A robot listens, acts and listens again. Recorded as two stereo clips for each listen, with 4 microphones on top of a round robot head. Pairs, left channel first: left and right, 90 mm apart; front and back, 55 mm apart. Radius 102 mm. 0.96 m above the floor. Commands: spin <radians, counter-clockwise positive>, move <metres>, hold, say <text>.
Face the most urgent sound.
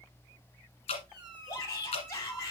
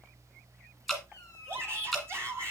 spin 2.53
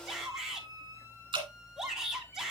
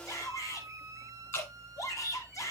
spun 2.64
say Found it: a shout, straight ahead.